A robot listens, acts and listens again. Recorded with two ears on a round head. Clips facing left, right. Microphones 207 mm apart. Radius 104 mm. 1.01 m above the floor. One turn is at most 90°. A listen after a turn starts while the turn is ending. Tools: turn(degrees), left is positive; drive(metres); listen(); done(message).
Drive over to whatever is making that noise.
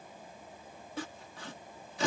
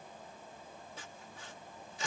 turn(degrees=55)
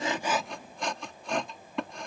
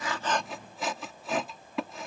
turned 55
drive(metres=1.0)
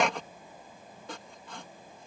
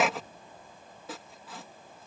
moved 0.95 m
drive(metres=1.0)
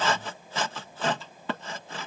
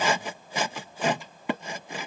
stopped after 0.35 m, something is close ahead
turn(degrees=-15)
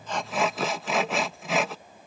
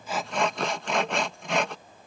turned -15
done("I am next to the sawing.")